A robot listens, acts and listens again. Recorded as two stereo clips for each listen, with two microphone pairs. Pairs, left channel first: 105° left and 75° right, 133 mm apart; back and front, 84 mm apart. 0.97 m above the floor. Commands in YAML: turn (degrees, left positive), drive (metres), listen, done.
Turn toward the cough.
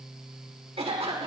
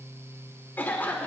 turn: -115
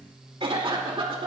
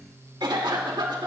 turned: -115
turn: -25
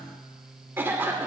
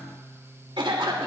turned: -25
done: "Found it: a cough, straight ahead."